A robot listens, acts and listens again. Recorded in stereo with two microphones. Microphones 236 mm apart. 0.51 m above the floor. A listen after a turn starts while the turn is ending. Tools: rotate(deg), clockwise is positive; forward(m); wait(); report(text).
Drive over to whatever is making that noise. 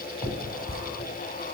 rotate(-20)
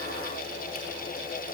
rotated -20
wait()
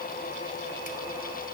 wait()
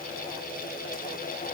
report("I heard a finger snap, but can't make it out now. It was about straight ahead or 140° left. I did not reach it.")